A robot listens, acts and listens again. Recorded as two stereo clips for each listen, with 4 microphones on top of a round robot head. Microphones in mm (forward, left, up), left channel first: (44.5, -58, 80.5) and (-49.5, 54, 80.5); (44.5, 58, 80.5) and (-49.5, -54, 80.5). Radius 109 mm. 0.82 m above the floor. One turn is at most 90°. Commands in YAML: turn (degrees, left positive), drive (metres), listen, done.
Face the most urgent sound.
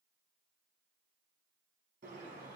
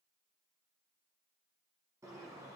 listen: true
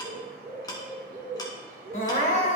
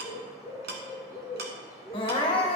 turn: -10
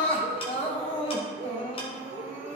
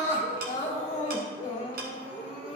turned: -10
done: "Found it: crying, straight ahead, 1 to 2 m away."